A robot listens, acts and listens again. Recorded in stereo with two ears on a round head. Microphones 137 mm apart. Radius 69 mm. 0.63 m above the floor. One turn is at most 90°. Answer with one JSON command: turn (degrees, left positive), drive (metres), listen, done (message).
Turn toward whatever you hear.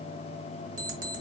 {"turn": -55}
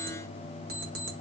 {"turn": -65}
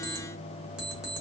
{"done": "Facing the alarm clock."}